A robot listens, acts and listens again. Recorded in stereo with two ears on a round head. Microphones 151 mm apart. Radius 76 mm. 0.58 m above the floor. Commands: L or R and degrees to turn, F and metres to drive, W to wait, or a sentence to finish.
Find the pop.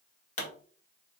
L45
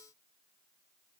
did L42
W
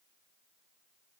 I heard a pop, but can't make it out now. It was about 5° left or 90° left.